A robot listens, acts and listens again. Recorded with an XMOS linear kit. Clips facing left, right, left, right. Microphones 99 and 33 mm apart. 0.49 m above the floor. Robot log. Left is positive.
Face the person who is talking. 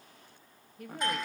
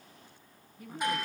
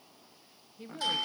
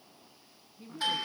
note: The woman speaking: about 65° left or 115° left.
cmd yaw +65
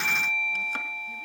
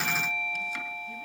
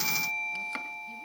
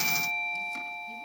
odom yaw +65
cmd idle
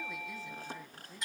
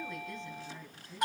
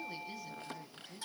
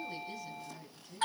end: Facing the woman speaking.